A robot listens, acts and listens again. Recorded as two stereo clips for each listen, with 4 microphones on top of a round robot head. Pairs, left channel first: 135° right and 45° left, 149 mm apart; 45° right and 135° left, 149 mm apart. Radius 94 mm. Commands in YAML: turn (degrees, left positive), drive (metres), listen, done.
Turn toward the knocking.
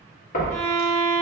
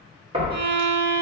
turn: -165
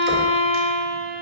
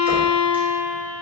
listen: true
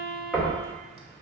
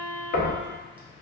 turn: -45
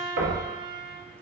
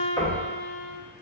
turn: 20
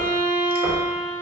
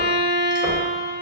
listen: true
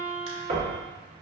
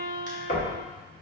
done: "Facing the knocking, 1 to 2 m away."